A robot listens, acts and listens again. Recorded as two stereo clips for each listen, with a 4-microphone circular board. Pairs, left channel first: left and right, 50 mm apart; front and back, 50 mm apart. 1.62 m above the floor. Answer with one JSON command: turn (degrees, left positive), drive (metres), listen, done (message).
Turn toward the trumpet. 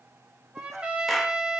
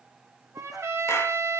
{"turn": -160}
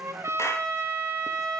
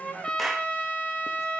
{"turn": -70}
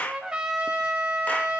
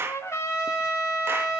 {"turn": -15}
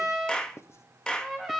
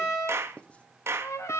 {"done": "Facing the trumpet, 2 to 4 m away."}